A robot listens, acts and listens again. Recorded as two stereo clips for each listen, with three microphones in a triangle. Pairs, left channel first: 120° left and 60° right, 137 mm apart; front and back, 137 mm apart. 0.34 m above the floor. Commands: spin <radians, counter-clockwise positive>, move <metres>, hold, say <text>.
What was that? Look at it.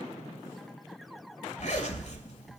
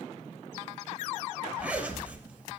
spin 1.75
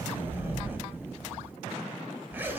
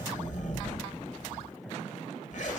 spin 0.26
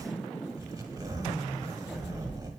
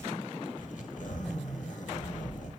say Facing the zipper.